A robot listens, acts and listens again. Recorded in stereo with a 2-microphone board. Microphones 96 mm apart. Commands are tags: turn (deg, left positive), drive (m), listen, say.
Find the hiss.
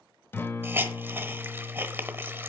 <turn deg="-20"/>
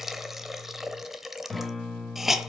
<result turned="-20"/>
<say>Facing the hiss.</say>